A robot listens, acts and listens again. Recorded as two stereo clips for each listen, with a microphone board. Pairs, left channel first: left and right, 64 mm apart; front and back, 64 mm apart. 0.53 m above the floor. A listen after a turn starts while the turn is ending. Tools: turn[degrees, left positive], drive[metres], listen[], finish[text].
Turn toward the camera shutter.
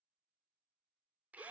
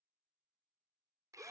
Action: listen[]
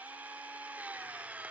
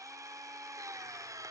Action: listen[]
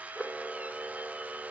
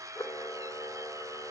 Action: finish[Facing the camera shutter.]